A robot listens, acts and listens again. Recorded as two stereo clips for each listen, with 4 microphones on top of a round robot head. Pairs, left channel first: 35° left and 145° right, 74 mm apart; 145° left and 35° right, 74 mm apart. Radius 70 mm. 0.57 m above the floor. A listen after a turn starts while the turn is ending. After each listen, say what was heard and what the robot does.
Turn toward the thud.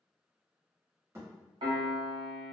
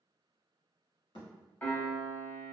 The thud: 160° left. Turn 160° left.
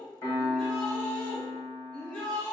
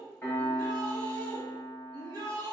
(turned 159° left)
I heard a thud from this way, but can't make it out now.